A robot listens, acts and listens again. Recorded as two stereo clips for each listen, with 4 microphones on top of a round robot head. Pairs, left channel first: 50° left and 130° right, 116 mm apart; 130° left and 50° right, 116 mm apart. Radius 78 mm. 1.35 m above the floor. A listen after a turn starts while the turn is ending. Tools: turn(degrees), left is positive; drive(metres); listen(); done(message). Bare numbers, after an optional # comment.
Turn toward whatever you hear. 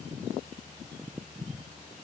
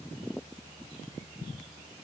listen()
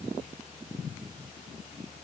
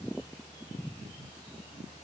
listen()
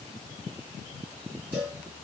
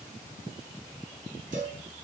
# The cowbell: 60° right.
turn(-60)
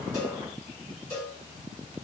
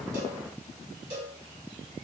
done("Facing the cowbell.")